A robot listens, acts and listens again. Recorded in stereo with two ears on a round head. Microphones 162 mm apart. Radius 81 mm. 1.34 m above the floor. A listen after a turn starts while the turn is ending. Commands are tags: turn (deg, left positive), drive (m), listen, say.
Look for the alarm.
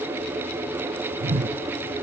<listen/>
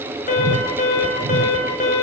<turn deg="50"/>
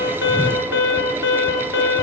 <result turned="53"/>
<turn deg="80"/>
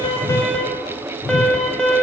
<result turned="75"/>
<say>Found it: an alarm, straight ahead, over 4 m away.</say>